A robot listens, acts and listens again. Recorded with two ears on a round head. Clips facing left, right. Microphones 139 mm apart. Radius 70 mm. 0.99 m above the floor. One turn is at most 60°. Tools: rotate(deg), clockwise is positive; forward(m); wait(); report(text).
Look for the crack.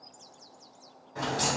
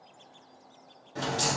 rotate(35)
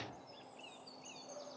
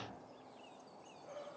wait()
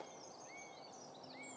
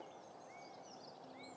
report("I heard a crack, but can't make it out now. It was about straight ahead or 110° right.")